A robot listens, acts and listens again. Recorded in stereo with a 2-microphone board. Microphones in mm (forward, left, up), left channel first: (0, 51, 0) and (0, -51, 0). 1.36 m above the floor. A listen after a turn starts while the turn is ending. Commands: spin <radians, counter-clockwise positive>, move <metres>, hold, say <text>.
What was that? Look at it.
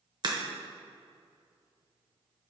spin -0.79
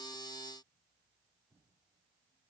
hold
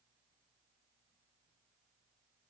say I heard a crack, but can't make it out now. It was about straight ahead or 90° right.